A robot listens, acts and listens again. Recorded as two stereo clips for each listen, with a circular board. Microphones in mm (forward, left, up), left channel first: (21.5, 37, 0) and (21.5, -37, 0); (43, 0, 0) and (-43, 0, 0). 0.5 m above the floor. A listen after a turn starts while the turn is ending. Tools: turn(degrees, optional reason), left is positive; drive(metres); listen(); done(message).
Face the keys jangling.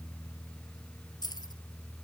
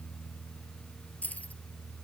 turn(degrees=70, reason="The keys jangling: 70° left.")
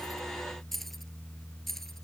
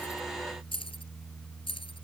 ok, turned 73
done("Found it: keys jangling, straight ahead.")